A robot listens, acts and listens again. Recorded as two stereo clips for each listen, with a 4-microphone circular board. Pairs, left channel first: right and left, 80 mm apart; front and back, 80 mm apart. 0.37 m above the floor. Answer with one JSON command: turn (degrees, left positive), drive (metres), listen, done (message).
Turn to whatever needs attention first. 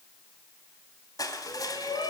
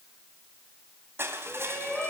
{"turn": -80}
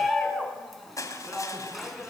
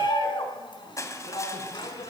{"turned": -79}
{"done": "Found it: a shout, straight ahead, over 4 m away."}